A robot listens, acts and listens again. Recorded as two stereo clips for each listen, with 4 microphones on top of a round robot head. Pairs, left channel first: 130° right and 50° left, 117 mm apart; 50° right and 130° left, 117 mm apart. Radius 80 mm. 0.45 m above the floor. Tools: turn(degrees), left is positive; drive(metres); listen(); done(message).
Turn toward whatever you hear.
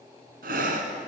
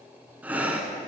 turn(degrees=50)
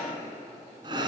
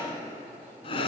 done("Found it: breathing, straight ahead.")